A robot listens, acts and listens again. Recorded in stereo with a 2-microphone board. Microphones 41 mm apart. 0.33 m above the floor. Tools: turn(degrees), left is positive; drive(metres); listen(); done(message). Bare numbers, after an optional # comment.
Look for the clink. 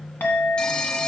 # The clink: about 55° left or 125° left.
turn(55)
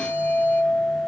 # So it is at 65° left.
turn(65)
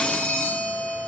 done("Facing the clink, 2 to 4 m away.")